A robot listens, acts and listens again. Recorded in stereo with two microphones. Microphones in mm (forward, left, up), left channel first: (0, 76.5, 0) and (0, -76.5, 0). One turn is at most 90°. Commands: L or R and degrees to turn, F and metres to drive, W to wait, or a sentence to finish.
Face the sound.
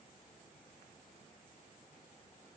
W
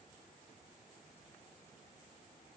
W
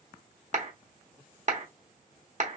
R50
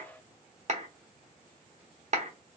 R65
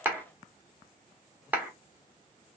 R15
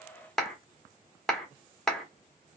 Found it: a clap, straight ahead, 1 to 2 m away.